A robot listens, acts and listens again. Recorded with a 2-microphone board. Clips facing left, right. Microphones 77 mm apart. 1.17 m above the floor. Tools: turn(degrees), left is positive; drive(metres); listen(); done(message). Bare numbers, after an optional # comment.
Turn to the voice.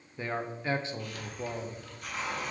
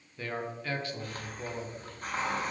# The man speaking: about 25° left or 155° left.
turn(25)
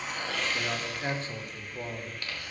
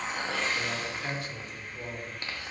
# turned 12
# So it is at 145° left.
turn(145)
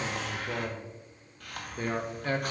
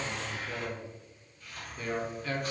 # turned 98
# The man speaking is now 45° left.
turn(45)
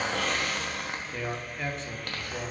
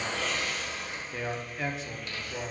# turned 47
done("Facing the man speaking.")